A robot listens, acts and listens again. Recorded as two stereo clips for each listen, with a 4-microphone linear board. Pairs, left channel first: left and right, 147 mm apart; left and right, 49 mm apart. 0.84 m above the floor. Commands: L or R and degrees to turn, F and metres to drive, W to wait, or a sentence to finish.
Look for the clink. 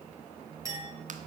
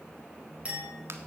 R25
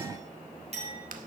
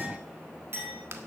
R130
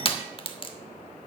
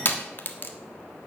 W
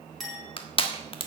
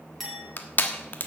Facing the clink.